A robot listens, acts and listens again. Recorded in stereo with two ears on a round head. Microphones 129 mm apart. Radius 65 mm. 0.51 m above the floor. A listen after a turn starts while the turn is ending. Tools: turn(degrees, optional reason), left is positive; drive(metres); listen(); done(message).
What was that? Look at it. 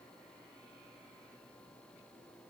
listen()
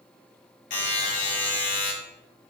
turn(degrees=60, reason="The buzzer: about 60° left or 120° left.")
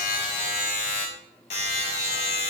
turn(degrees=50, reason="So it is at 50° left.")
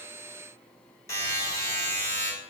turn(degrees=25, reason="The buzzer is now 25° left.")
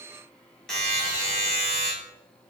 done("Facing the buzzer, 1 to 2 m away.")